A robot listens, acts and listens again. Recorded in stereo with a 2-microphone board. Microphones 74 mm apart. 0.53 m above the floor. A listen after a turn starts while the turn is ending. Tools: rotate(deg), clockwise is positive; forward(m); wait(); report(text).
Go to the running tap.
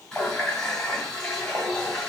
rotate(-30)
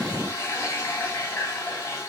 rotate(-140)
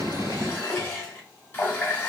rotate(-30)
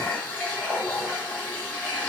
rotate(-25)
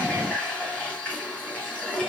rotate(-20)
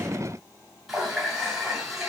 forward(1.0)
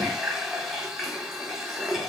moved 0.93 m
forward(1.0)
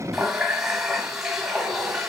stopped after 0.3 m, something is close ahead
report("I am next to the running tap.")